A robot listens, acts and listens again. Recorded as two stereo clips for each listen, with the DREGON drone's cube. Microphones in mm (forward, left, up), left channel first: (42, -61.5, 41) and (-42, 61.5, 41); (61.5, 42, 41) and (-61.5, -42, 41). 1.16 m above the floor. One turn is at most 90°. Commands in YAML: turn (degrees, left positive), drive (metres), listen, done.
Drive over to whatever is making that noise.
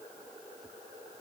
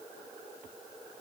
listen: true
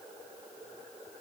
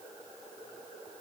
listen: true
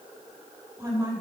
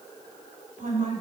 turn: -90
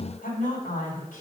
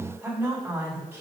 turn: -70
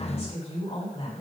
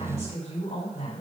drive: 1.0
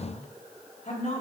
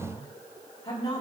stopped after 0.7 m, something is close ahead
turn: -15
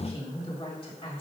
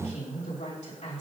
done: "Blocked. The woman speaking is further on, straight ahead."